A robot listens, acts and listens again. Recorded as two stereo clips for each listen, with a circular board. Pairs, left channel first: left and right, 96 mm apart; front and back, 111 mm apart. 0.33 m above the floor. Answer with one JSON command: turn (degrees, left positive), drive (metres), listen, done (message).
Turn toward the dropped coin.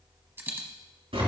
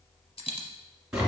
{"turn": -25}
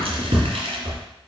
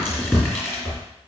{"done": "I heard a dropped coin from this way, but can't make it out now."}